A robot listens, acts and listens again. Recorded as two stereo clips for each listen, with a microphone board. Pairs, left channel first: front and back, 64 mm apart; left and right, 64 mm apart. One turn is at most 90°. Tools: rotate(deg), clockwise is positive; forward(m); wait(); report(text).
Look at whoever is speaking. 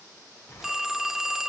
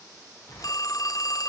wait()
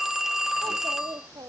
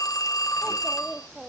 rotate(90)
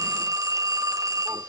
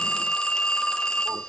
rotate(90)
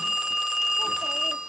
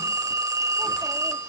rotate(10)
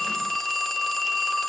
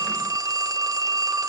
wait()
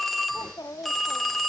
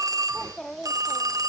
report("Facing the child speaking, 1 to 2 m away.")